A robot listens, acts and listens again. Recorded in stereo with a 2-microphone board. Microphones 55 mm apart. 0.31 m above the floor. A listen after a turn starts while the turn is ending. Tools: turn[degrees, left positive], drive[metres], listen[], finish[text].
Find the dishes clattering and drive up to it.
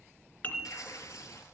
Thought: The dishes clattering: about 35° left or 145° left.
Action: turn[35]
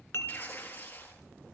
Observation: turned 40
Action: listen[]
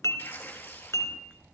Thought: So it is at 100° left.
Action: turn[100]
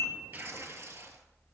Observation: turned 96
Action: listen[]
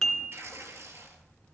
Action: drive[1.0]
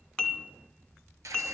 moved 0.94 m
Thought: The dishes clattering is now 10° left.
Action: turn[10]
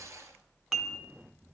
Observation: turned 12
Action: drive[1.0]
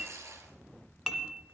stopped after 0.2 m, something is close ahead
Action: finish[Arrived at the dishes clattering, straight ahead.]